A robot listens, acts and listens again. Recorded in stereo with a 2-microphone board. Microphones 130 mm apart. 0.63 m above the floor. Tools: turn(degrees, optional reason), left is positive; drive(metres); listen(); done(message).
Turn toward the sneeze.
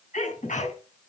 turn(degrees=90)
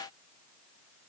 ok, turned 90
done("Facing where the sneeze came from. I can't hear it now.")